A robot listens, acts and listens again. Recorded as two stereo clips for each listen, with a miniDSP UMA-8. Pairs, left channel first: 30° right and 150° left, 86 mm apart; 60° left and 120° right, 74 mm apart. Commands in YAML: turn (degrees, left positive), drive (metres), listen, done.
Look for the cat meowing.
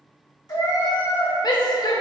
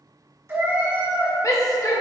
turn: -55
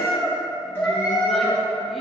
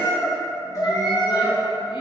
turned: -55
turn: 50
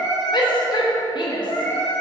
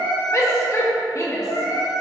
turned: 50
turn: 30
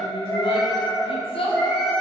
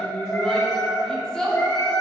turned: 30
done: "Facing the cat meowing."